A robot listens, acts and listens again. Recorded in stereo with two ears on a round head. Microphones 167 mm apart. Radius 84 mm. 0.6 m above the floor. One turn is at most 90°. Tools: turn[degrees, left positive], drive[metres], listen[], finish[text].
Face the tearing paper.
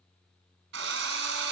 Action: listen[]
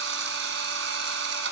Action: listen[]
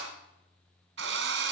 Action: finish[I can't make out tearing paper to turn to.]